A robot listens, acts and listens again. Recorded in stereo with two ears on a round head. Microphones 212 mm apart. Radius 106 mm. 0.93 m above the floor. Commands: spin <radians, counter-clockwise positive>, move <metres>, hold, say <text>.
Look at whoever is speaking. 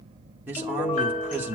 spin -0.52
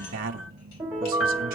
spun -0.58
spin -2.44
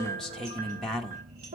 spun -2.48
say Facing the man speaking.